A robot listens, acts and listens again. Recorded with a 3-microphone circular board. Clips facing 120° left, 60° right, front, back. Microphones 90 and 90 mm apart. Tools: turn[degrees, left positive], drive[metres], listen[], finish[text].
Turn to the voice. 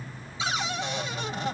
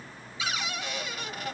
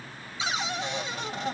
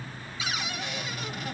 Action: listen[]
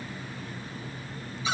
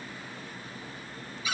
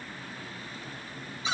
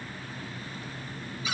Action: listen[]
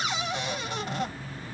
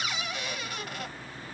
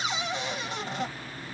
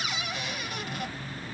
Action: finish[I can't make out anyone speaking, only a cupboard door.]